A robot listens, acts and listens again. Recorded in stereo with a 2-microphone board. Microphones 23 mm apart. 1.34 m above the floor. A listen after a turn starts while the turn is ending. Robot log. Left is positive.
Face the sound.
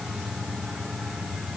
cmd idle
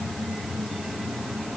cmd idle
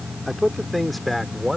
cmd yaw -30
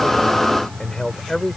note: So it is at 20° left.
cmd yaw +20
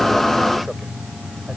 cmd idle
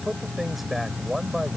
note: The man speaking is now 10° right.
cmd yaw -10
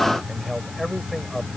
end: Facing the man speaking.